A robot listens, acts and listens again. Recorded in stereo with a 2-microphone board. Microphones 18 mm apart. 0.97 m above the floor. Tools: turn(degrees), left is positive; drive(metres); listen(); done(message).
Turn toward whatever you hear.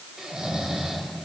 turn(degrees=-55)
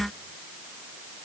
listen()
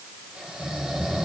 turn(degrees=-70)
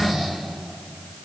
turn(degrees=-15)
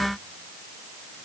listen()
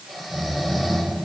done("Facing the snoring.")